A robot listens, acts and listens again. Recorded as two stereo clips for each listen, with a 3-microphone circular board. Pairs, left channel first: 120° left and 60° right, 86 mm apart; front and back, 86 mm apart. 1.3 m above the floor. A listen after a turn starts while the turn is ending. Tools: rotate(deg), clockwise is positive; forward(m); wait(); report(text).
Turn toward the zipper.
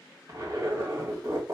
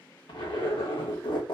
rotate(10)
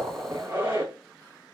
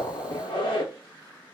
report("Found it: a zipper, straight ahead, 1 to 2 m away.")